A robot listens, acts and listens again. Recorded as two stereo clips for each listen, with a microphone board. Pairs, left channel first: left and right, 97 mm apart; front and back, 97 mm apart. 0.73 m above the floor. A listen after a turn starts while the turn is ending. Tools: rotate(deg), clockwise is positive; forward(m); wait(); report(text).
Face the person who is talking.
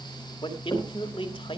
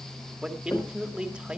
rotate(-100)
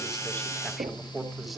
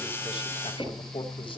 wait()
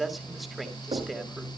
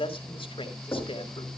report("Found it: a man speaking, straight ahead.")